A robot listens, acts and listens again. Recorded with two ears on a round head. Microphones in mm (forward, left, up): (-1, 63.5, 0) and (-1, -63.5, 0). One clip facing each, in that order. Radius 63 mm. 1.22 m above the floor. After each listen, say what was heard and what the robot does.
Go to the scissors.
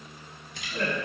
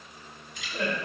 The scissors: about 55° left or 125° left. Turn 55° left.
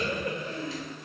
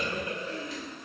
Keep listening.
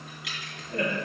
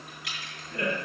Keep listening.
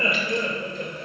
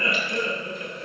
I heard scissors, but can't make it out now. It was about straight ahead or 70° left. I did not reach it.